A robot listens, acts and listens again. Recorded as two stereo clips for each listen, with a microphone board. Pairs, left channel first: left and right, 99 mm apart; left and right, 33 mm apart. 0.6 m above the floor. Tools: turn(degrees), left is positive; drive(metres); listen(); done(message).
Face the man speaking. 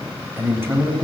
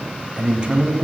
turn(degrees=-20)
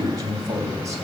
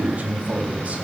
turn(degrees=-35)
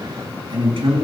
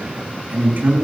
turn(degrees=-120)
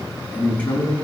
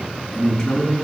turn(degrees=15)
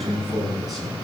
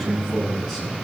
done("Facing the man speaking.")